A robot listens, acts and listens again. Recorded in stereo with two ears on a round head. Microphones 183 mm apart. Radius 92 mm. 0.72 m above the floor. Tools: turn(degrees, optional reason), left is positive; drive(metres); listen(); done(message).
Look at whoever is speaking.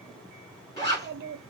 turn(degrees=-50, reason="The child speaking: about 50° right or 130° right.")
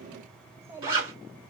turn(degrees=-15, reason="So it is at 15° right.")
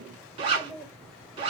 done("Facing the child speaking.")